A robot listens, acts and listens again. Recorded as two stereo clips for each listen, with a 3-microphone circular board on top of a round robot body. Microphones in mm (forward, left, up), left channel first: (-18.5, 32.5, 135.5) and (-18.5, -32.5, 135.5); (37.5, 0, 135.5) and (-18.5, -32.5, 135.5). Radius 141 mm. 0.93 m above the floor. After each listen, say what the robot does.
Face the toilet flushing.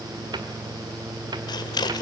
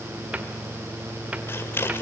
Keep listening.
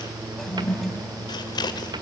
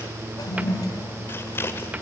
Facing the toilet flushing, 2 to 4 m away.